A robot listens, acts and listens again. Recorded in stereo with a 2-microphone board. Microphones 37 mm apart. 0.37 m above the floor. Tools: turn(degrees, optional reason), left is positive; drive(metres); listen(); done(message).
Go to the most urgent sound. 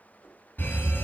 turn(degrees=60, reason="The fire alarm: about 60° left or 120° left.")
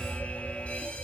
turn(degrees=45, reason="So it is at 45° left.")
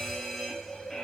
turn(degrees=10, reason="The fire alarm is now 10° left.")
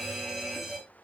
drive(metres=1.0)
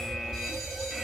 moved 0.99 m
drive(metres=1.0)
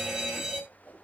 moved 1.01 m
turn(degrees=-10, reason="The fire alarm is now 10° right.")
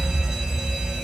drive(metres=1.0)
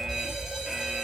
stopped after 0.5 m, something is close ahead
done("Arrived at the fire alarm, straight ahead.")